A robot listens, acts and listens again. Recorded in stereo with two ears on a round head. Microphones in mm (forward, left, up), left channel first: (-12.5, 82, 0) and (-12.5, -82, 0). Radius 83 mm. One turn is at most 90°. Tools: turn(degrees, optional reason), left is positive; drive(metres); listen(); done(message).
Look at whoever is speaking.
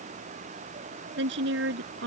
turn(degrees=-60, reason="The woman speaking: about 60° right or 120° right.")
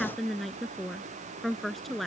done("Facing the woman speaking.")